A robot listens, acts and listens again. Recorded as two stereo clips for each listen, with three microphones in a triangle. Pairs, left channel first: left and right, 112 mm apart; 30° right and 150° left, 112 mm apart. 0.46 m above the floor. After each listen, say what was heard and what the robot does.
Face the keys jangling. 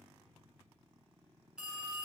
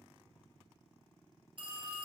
Keep listening.
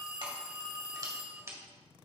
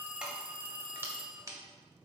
The keys jangling: 150° right. Turn 150° right.
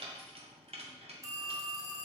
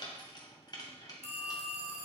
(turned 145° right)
The keys jangling is now 80° right. Turn 80° right.
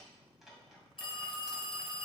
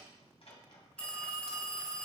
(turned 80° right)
Found it: keys jangling, straight ahead.